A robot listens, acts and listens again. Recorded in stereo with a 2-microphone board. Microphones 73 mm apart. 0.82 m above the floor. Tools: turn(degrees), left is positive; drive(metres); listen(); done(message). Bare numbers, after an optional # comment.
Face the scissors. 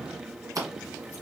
# The scissors: about 60° right or 120° right.
turn(-60)
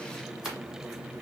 done("Facing the scissors.")